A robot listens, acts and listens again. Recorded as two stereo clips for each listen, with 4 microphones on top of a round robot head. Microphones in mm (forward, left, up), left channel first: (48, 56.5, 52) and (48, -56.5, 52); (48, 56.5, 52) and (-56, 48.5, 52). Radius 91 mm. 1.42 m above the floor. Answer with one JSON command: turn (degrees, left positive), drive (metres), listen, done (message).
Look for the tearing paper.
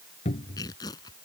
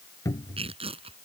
{"turn": 155}
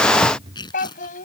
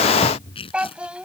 {"turn": 40}
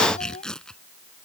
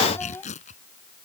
{"done": "Found it: tearing paper, straight ahead."}